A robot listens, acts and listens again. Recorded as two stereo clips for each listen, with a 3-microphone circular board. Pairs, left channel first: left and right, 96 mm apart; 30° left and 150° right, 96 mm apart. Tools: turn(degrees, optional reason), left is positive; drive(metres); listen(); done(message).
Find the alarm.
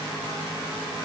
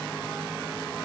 listen()
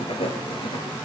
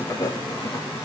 listen()
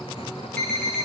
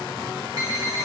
turn(degrees=160, reason="The alarm: 160° left.")
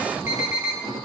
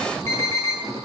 turn(degrees=-30, reason="The alarm is now 30° right.")
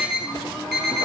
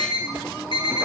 turn(degrees=-10, reason="The alarm is now 10° right.")
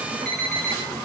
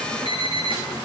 done("Facing the alarm.")